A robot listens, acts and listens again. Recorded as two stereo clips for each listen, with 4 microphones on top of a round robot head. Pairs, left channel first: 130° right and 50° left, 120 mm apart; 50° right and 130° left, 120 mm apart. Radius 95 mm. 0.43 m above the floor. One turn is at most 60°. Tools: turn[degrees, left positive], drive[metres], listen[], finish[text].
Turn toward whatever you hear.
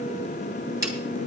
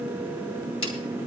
Thought: The snare drum: 15° right.
Action: turn[-15]
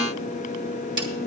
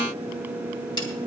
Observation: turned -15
Action: finish[Found it: a snare drum, straight ahead, 2 to 4 m away.]